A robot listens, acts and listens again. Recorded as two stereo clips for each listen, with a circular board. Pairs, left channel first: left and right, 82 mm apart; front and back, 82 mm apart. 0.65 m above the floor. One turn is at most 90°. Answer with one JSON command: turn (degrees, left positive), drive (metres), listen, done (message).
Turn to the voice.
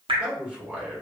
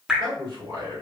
{"turn": -90}
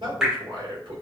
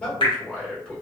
{"turn": -75}
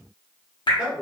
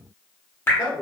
{"done": "Facing the man speaking, 1 to 2 m away."}